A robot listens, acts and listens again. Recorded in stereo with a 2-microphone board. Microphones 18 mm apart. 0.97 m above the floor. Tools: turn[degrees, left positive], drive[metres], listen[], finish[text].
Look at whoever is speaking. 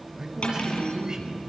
Thought: The man speaking: about 45° right or 135° right.
Action: turn[-45]
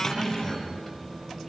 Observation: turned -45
Action: finish[Facing the man speaking, over 4 m away.]